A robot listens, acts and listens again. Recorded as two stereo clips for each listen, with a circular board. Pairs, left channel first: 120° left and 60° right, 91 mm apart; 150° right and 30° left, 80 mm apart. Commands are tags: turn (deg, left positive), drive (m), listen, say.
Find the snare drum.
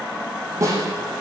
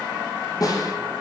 <turn deg="-110"/>
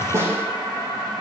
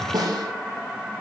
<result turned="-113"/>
<say>Facing the snare drum.</say>